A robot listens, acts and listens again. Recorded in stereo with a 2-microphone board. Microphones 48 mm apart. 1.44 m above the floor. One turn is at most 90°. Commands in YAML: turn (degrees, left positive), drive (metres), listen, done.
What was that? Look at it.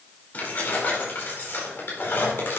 turn: 50
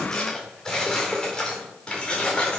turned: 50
turn: 25
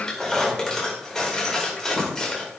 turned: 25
turn: 10
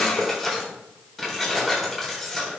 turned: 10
done: "Facing the keys jangling."